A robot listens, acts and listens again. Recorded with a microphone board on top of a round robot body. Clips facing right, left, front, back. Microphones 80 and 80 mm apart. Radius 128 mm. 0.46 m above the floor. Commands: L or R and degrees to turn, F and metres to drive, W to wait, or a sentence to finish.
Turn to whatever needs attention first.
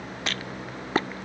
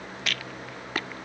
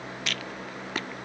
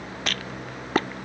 W
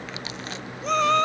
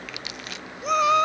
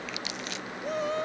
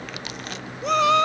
L170
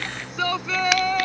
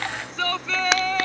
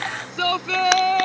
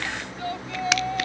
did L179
Found it: a shout, straight ahead.